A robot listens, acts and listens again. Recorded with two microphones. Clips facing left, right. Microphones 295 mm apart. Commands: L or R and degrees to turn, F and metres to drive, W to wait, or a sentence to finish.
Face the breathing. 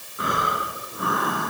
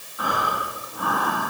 L25
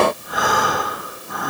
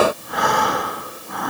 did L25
Facing the breathing.